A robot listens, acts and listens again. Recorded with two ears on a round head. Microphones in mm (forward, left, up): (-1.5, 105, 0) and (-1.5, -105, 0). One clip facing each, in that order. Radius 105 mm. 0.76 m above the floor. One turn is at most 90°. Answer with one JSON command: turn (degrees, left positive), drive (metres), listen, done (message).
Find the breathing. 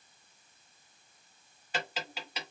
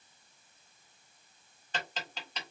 {"listen": true}
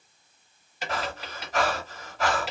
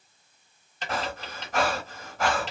{"turn": -40}
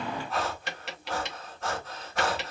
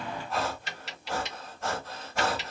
{"done": "Found it: breathing, straight ahead, 1 to 2 m away."}